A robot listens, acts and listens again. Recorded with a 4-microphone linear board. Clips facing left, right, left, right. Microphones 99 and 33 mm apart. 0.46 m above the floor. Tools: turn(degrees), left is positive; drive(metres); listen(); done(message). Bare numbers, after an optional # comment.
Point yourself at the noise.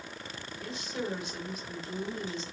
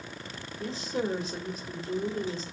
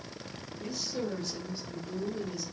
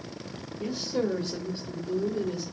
# The woman speaking: about 40° right or 140° right.
turn(-40)
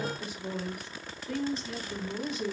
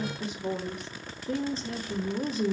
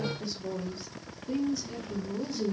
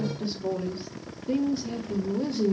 # The woman speaking: about 40° right or 140° right.
turn(-40)
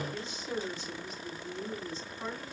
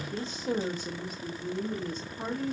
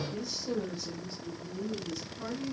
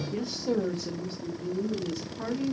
# The woman speaking: about 45° right or 135° right.
turn(-45)
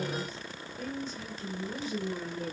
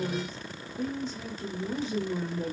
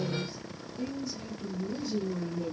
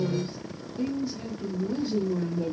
# So it is at 20° right.
turn(-20)
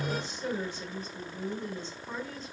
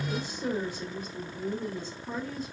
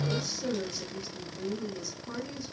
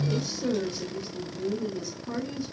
# The woman speaking is now 10° right.
turn(-10)
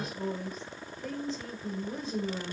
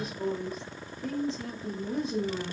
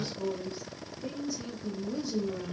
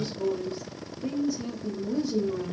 done("Facing the woman speaking, 1 to 2 m away.")